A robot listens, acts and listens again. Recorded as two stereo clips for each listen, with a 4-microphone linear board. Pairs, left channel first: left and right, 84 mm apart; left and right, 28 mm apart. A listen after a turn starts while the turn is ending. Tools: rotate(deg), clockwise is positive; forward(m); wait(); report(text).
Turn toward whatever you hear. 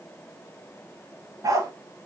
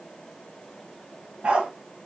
rotate(45)
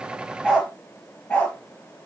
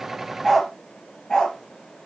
rotate(-15)
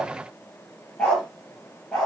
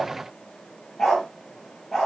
rotate(-10)
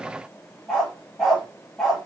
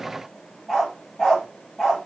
report("Facing the dog barking, over 4 m away.")